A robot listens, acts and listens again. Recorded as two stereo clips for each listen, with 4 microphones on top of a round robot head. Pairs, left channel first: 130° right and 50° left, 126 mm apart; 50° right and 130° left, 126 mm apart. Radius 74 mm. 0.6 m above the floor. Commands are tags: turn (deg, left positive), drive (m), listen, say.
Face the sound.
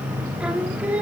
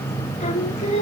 <turn deg="-30"/>
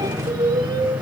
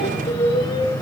<say>Facing the singing.</say>